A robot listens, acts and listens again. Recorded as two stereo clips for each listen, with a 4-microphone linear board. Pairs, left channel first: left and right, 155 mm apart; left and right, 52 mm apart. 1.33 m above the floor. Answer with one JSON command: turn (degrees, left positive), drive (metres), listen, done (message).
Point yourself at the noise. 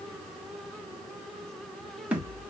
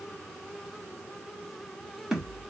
{"turn": -30}
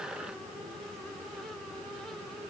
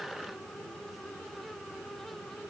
{"listen": true}
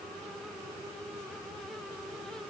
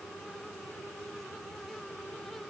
{"done": "I heard a thud, but can't make it out now. It was about 20° left or 140° right."}